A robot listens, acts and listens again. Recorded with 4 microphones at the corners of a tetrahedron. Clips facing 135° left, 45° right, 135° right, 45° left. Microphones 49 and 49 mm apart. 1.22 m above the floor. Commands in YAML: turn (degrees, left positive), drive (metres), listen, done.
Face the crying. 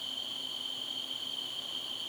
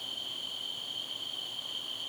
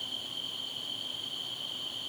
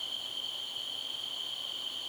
listen: true
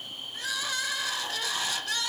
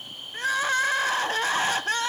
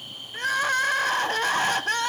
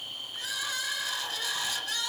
turn: -95
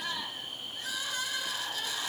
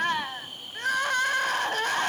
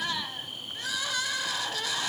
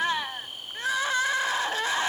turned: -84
turn: -10
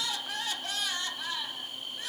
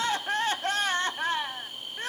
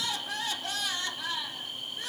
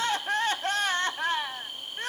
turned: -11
done: "Found it: crying, straight ahead."